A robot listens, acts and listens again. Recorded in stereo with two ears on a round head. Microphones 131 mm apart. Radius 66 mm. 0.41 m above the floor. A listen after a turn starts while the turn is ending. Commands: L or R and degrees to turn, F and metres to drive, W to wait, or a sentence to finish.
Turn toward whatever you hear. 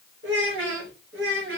R90
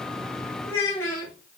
L20
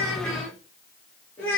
L10
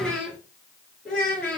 Facing the child speaking.